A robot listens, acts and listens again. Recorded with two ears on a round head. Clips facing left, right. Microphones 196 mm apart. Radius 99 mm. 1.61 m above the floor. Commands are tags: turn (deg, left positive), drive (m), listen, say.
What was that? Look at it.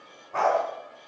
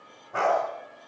<turn deg="-30"/>
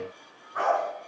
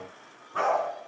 <turn deg="-140"/>
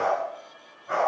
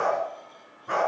<turn deg="-60"/>
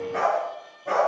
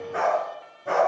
<say>Found it: a dog barking, straight ahead.</say>